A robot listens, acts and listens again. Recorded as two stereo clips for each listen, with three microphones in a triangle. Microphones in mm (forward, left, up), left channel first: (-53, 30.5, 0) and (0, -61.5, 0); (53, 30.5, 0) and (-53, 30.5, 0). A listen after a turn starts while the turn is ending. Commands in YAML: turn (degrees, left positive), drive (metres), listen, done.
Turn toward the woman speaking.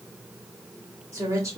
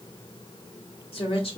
done: "Facing the woman speaking, 2 to 4 m away."